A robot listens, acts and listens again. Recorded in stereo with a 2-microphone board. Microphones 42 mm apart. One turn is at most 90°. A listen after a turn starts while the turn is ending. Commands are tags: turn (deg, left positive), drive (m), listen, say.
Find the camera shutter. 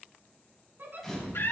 <turn deg="30"/>
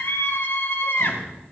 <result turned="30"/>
<listen/>
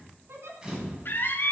<turn deg="-25"/>
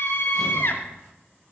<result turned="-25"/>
<listen/>
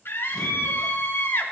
<listen/>
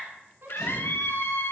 <say>Facing where the camera shutter came from. I can't hear it now.</say>